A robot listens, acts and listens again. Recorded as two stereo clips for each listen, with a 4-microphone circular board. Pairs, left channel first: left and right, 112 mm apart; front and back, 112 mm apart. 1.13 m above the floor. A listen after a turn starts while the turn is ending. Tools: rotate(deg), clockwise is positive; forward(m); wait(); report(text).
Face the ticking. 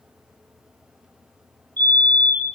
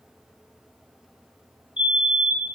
wait()
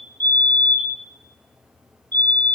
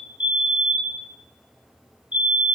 wait()
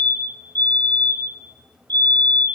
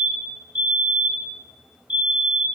report("I can't make out ticking, only a fire alarm.")